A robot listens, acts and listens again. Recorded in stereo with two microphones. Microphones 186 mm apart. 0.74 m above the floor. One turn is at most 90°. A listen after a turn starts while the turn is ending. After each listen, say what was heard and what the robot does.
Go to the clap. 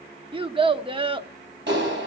Turn 90° right.
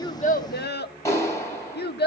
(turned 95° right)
So it is at 15° left. Turn 15° left.
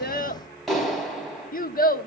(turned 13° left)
Drive 1.0 m forward.
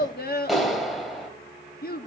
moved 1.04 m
Drive 1.0 m forward.
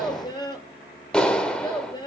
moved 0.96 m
Drive 1.0 m forward.
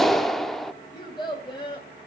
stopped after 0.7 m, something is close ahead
Arrived at the clap, straight ahead.